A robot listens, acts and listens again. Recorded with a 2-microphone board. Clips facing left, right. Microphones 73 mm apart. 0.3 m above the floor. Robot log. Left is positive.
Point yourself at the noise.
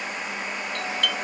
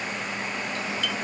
note: The doorbell: about 60° left or 120° left.
cmd yaw +60
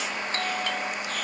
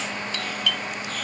note: So it is at 40° left.
cmd yaw +40
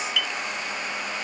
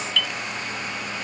note: The doorbell is now 10° left.
cmd yaw +10
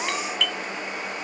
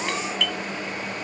end: Facing the doorbell.